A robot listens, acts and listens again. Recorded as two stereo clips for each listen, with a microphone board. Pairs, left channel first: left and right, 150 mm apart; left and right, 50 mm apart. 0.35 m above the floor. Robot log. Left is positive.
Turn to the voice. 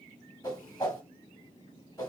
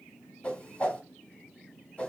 cmd idle
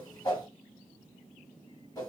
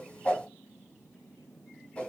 cmd idle
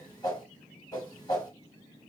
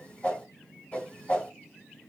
end: I can't make out anyone speaking, only a whoosh.